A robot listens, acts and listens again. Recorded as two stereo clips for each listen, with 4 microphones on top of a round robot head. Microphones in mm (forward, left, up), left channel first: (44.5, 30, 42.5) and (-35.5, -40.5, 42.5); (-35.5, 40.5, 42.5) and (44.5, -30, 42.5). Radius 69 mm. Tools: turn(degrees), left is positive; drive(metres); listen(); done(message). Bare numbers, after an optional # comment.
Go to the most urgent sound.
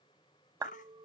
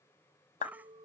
# The baby crying: 35° left.
turn(35)
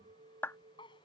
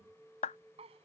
listen()
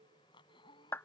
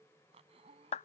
listen()
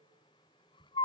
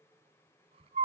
drive(1.0)
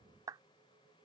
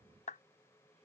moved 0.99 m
listen()
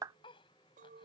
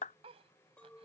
listen()
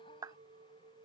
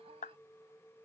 done("I heard a baby crying from this way, but can't make it out now. I did not reach it.")